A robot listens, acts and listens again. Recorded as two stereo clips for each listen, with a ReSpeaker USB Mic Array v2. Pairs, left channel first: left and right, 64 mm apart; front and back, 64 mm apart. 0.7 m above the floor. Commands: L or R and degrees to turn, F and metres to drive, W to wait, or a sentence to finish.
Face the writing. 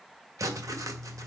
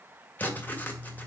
R65
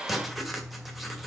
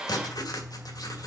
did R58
Facing the writing.